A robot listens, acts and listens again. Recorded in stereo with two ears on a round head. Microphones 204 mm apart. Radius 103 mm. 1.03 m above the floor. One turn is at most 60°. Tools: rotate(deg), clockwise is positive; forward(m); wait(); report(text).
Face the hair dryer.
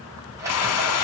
rotate(-60)
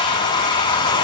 rotate(-20)
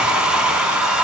report("Facing the hair dryer, under 1 m away.")